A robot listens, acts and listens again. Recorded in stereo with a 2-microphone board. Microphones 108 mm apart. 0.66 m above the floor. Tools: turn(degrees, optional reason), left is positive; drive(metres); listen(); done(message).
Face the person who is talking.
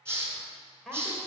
turn(degrees=30)
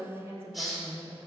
turn(degrees=-25, reason="So it is at 25° right.")
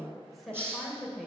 done("Found it: a woman speaking, straight ahead, 2 to 4 m away.")